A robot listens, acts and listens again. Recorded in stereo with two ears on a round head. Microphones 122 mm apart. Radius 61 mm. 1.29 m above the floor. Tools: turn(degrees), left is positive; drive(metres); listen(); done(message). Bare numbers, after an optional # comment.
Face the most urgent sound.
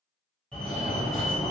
turn(30)
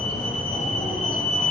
# So it is at 145° left.
turn(145)
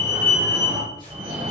# The fire alarm is now 35° right.
turn(-35)
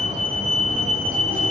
done("Found it: a fire alarm, straight ahead.")